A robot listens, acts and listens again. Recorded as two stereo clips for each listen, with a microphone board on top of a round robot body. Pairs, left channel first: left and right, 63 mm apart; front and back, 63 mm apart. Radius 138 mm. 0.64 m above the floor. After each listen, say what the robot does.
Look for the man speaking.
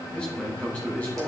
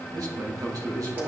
Turn 155° left.
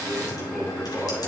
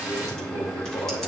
Turn 15° right.
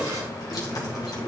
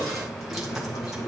Keep listening.
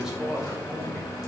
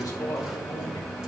Turn 10° right.
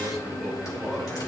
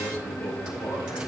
Found it: a man speaking, straight ahead.